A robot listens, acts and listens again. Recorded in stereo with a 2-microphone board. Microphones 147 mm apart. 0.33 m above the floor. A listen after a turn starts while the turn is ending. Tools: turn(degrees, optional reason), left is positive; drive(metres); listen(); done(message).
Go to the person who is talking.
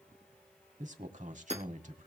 turn(degrees=-60, reason="The man speaking: about 60° right or 120° right.")
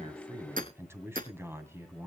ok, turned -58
turn(degrees=-20, reason="So it is at 20° right.")
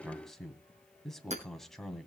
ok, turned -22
drive(metres=1.0)
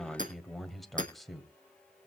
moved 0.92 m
drive(metres=1.0)
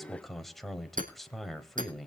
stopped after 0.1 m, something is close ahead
done("I am next to the man speaking.")